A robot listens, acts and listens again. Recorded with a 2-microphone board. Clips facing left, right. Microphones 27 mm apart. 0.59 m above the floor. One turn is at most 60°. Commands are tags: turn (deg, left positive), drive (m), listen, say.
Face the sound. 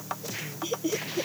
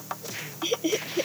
<turn deg="-40"/>
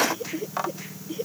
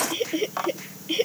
<turn deg="-60"/>
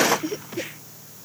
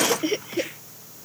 <turn deg="-50"/>
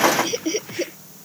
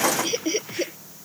<say>Facing the laughter.</say>